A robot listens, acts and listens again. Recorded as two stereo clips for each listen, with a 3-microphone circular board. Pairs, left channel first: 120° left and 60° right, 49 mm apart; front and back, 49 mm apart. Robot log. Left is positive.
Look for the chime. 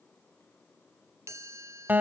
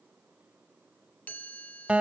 note: The chime: 60° right.
cmd yaw -60
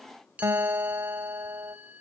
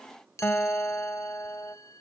end: Found it: a chime, straight ahead.